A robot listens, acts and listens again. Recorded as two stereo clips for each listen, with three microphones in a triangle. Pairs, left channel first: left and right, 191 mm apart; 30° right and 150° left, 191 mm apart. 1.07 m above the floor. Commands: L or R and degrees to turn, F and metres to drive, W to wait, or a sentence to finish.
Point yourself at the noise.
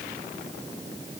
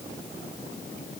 W
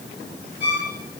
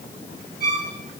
R65
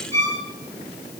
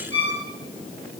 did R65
R35
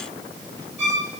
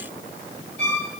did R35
R10
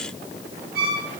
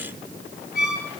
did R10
Facing the violin.